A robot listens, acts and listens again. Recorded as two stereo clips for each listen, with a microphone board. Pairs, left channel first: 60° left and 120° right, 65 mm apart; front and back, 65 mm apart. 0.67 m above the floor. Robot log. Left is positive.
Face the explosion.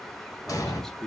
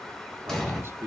note: The explosion: 85° left.
cmd yaw +85
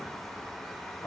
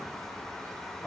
end: I heard an explosion from this way, but can't make it out now.